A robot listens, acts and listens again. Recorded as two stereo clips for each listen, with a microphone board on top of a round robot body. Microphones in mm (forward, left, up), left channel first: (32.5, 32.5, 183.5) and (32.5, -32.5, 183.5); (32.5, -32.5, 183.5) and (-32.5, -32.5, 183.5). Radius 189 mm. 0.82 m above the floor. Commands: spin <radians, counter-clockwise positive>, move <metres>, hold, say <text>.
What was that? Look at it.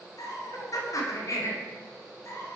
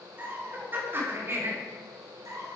spin 2.44
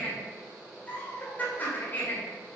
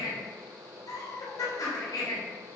spin 0.52
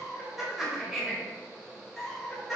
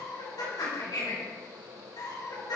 say Found it: laughter, straight ahead, over 4 m away.